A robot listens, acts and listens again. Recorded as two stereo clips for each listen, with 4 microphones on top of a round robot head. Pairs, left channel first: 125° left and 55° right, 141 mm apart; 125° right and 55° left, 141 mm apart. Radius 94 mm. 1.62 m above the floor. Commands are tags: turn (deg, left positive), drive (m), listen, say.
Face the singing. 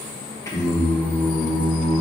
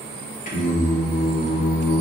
<turn deg="-145"/>
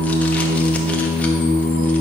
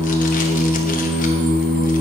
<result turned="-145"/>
<say>Found it: singing, straight ahead.</say>